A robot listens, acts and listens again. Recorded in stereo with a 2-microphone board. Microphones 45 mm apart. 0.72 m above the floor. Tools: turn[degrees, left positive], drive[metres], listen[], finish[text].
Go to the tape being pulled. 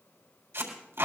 Action: turn[-90]
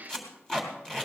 Thought: So it is at 15° left.
Action: turn[15]
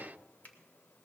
Action: listen[]
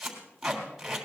Action: drive[1.0]
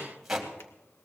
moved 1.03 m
Action: drive[1.0]
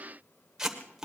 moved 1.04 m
Thought: The tape being pulled is now 10° right.
Action: turn[-10]
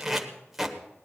Action: drive[1.0]
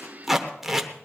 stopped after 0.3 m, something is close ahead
Action: finish[Arrived at the tape being pulled, straight ahead.]